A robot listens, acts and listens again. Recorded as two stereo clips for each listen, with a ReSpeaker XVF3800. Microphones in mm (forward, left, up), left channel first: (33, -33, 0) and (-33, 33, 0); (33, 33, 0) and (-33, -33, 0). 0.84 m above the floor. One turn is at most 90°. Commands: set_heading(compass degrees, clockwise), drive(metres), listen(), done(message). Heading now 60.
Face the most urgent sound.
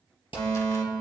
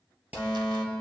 done("Facing the fire alarm, 2 to 4 m away.")